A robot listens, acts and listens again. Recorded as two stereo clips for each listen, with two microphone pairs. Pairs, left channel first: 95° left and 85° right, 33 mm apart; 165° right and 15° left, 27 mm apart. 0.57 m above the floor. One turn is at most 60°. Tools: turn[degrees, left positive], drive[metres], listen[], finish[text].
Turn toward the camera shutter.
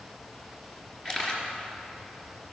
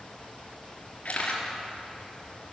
Thought: The camera shutter: 160° left.
Action: turn[60]
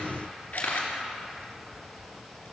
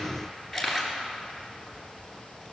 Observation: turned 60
Thought: The camera shutter is now 105° left.
Action: turn[60]
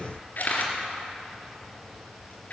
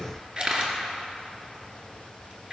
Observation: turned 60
Thought: The camera shutter is now 65° left.
Action: turn[60]
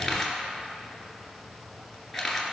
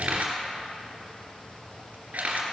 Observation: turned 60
Action: finish[Found it: a camera shutter, straight ahead.]